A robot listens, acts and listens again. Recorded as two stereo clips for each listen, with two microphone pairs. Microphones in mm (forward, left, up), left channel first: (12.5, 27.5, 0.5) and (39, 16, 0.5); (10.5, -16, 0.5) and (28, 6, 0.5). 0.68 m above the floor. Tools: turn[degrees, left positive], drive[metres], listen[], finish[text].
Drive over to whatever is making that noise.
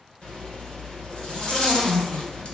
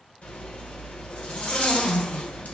Thought: The zipper: 150° right.
Action: turn[-150]
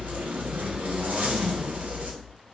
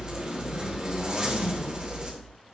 Thought: The zipper is now 10° right.
Action: turn[-10]
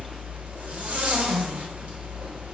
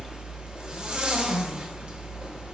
Action: drive[1.0]
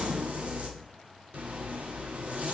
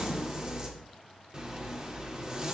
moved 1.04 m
Thought: The zipper is now 10° right.
Action: turn[-10]
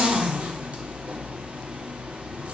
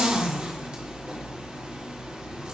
Action: drive[1.0]
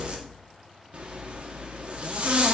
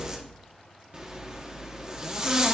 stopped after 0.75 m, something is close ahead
Action: finish[I am next to the zipper.]